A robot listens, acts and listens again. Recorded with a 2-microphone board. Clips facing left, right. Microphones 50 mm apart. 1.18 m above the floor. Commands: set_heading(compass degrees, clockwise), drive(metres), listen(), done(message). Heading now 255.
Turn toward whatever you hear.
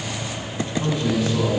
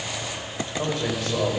set_heading(320)
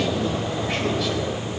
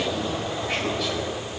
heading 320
done("Found it: a man speaking, straight ahead.")